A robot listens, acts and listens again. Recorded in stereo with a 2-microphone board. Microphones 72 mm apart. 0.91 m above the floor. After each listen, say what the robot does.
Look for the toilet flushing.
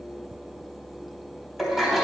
Turn 30° right.
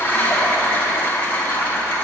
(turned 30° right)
Turn 25° left.
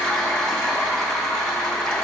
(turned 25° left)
Found it: a toilet flushing, straight ahead.